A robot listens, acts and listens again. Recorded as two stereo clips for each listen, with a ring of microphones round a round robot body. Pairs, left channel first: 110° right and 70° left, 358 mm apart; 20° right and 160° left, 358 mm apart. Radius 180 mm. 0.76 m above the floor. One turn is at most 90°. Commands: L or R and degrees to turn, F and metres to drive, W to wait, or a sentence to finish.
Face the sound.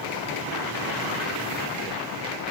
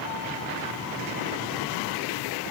W
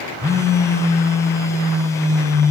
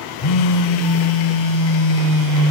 R30
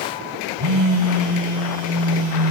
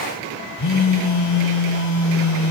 L25
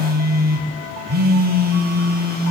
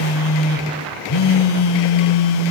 Found it: a phone buzzing, straight ahead, 2 to 4 m away.